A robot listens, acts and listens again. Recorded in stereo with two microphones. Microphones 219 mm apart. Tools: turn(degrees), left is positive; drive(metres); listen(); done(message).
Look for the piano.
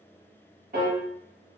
turn(degrees=-40)
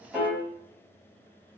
done("Facing the piano, under 1 m away.")